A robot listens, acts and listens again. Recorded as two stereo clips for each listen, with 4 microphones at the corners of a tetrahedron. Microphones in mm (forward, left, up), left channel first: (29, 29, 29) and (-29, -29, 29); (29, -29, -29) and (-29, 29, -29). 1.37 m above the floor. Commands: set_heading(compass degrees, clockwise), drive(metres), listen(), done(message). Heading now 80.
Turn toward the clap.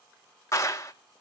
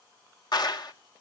set_heading(90)
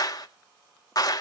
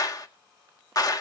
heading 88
done("Facing the clap.")